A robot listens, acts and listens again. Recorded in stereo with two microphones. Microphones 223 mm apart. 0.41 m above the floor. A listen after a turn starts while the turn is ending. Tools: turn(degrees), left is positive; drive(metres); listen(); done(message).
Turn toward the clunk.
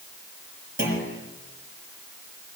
turn(degrees=-55)
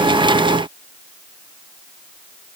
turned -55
listen()
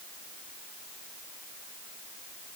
done("I heard a clunk, but can't make it out now. It was about straight ahead or 70° right.")